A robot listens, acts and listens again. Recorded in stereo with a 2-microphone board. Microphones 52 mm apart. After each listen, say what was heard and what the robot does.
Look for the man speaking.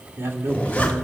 The man speaking: about 60° right or 120° right. Turn 60° right.
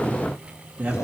So it is at 25° right. Turn 25° right.
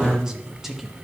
Found it: a man speaking, straight ahead.